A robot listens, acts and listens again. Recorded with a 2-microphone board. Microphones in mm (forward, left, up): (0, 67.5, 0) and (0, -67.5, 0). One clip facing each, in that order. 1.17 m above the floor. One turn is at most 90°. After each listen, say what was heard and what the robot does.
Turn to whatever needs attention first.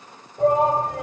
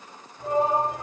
Turn 90° left.
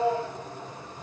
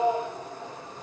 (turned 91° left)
So it is at 10° right. Turn 10° right.
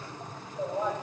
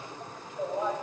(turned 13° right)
Facing the shout, over 4 m away.